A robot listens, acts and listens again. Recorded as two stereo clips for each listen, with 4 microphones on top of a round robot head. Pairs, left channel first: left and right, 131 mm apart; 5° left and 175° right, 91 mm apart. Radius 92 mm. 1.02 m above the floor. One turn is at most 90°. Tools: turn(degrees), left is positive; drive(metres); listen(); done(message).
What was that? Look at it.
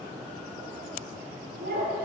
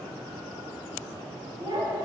turn(degrees=-90)
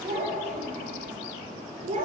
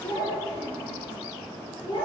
turn(degrees=-55)
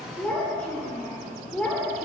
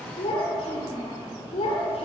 turn(degrees=10)
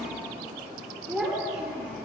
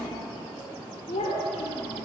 done("Facing the child speaking, 2 to 4 m away.")